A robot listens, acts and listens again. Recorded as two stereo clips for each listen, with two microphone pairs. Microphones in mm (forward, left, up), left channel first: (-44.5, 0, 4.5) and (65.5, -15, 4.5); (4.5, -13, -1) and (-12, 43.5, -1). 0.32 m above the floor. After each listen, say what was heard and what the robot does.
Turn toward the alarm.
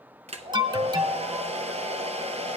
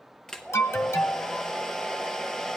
The alarm: 45° right. Turn 45° right.
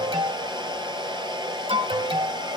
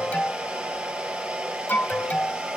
The alarm is now 15° right. Turn 15° right.
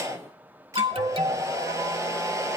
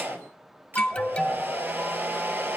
Found it: an alarm, straight ahead.